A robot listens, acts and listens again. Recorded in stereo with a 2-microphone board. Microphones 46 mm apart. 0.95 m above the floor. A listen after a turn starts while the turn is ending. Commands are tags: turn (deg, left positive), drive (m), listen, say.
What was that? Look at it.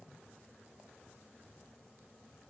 <listen/>
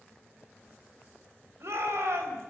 <turn deg="-70"/>
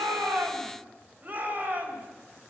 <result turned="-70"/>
<turn deg="-35"/>
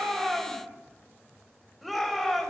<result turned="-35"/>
<say>Facing the shout.</say>